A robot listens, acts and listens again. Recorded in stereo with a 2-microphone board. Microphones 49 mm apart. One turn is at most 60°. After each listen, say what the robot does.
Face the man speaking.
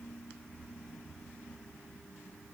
Keep listening.
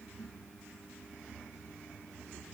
Keep listening.
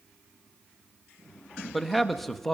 Turn 30° left.
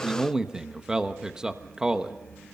Turn 15° right.
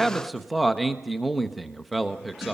Found it: a man speaking, straight ahead, 1 to 2 m away.